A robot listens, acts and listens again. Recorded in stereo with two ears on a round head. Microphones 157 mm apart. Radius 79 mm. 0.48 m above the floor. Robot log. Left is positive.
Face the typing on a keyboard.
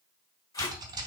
note: The typing on a keyboard: about 25° right or 155° right.
cmd yaw -25
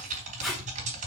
note: So it is at 130° right.
cmd yaw -130
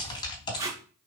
note: The typing on a keyboard is now 30° left.
cmd yaw +30
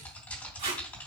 note: The typing on a keyboard is now 10° left.
cmd yaw +10
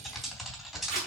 end: Facing the typing on a keyboard.